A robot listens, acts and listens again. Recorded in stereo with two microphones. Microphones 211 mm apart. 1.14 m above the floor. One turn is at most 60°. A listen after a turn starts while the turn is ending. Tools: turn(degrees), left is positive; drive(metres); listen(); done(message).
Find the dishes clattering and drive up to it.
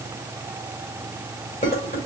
turn(degrees=40)
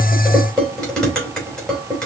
drive(metres=1.0)
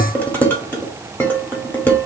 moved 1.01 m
turn(degrees=10)
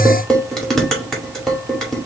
drive(metres=1.0)
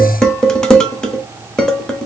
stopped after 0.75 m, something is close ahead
done("Arrived at the dishes clattering, straight ahead.")